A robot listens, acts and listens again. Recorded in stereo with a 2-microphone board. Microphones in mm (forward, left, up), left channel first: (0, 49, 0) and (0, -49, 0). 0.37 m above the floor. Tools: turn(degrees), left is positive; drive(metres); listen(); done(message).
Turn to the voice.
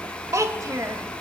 turn(degrees=-35)
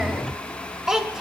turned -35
done("Found it: a child speaking, straight ahead.")